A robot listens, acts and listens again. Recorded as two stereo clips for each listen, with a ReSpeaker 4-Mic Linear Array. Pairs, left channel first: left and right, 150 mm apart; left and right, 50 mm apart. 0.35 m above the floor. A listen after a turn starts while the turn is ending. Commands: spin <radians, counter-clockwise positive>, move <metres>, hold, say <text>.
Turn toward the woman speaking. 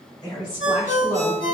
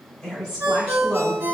spin 0.35
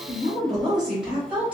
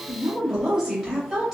spin -0.17
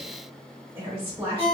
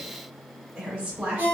spin -0.44
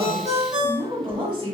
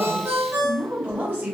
spin -0.61
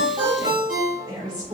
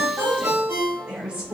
spin -0.61
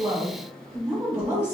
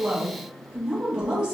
spin -0.44
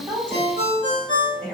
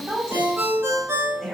say Facing the woman speaking.